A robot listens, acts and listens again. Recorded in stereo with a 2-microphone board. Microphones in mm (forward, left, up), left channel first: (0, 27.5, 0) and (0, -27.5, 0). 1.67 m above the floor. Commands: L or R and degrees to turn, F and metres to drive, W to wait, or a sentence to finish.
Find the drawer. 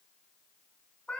W
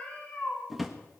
R30
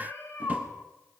W
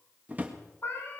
R145
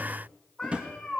R25
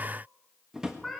R15
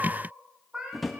Facing the drawer, 1 to 2 m away.